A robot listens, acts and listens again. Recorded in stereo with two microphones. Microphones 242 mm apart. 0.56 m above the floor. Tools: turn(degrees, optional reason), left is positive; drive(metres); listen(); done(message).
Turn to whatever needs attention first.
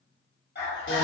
turn(degrees=45, reason="The scream: about 45° left or 135° left.")
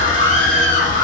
turn(degrees=75, reason="So it is at 75° left.")
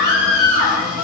done("Facing the scream.")